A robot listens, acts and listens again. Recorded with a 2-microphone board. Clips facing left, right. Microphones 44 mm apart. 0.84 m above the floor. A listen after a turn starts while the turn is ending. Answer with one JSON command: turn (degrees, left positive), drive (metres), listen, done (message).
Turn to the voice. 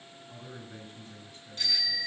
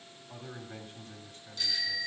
{"turn": -50}
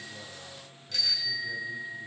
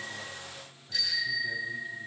{"listen": true}
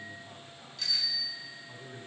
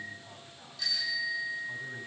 {"done": "Facing the man speaking, 2 to 4 m away."}